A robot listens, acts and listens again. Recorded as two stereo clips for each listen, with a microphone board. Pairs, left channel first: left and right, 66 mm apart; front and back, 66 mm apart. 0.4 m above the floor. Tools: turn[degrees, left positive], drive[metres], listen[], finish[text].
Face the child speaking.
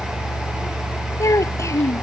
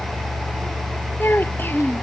Thought: The child speaking: 55° left.
Action: turn[55]
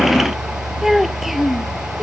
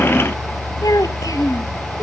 Action: finish[Facing the child speaking.]